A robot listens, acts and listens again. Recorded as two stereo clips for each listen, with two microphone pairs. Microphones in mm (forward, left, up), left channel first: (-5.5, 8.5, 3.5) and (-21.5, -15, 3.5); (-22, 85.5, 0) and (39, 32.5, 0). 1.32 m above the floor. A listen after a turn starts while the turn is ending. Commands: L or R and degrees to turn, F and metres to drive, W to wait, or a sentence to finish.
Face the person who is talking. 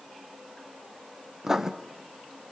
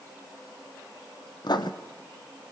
W
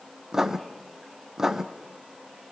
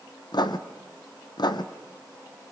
W
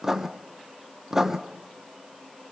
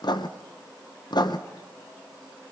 I can't make out anyone speaking, only writing.